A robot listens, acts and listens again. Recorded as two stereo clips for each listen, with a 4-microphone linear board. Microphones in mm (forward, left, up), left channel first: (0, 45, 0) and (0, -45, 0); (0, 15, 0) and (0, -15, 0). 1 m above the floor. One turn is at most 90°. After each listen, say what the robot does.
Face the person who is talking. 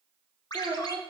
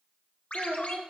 Turn 90° right.
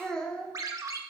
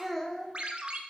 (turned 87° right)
Turn 10° left.
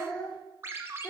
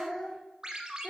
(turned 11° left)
Turn 15° left.
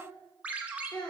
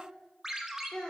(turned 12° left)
Turn 10° left.
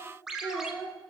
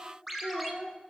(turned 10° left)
Facing the child speaking.